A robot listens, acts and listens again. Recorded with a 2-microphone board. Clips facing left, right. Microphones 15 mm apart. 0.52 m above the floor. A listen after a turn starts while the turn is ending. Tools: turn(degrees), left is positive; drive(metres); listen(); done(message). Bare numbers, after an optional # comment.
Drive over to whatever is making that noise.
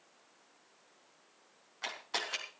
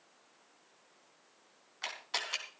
turn(-30)
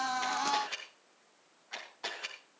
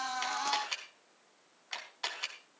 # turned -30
# So it is at 135° right.
turn(-135)
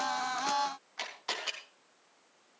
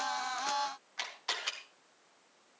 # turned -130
drive(1.0)
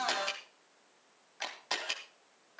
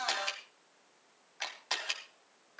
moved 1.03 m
# The camera shutter is now 10° right.
turn(-10)
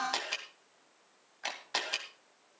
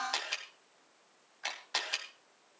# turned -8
drive(1.0)
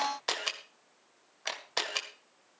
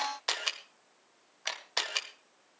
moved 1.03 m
drive(1.0)
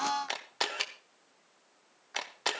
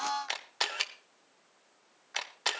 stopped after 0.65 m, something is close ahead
done("Arrived at the camera shutter, straight ahead.")